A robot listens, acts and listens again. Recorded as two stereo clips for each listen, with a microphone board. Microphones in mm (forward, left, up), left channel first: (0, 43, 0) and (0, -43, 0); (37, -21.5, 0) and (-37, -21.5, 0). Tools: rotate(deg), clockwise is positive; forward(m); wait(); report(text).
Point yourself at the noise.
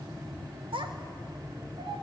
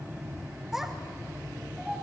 rotate(100)
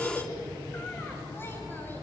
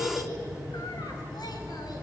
rotate(-25)
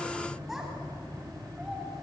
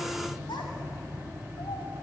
wait()
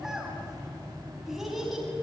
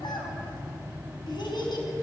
report("Found it: a child speaking, straight ahead.")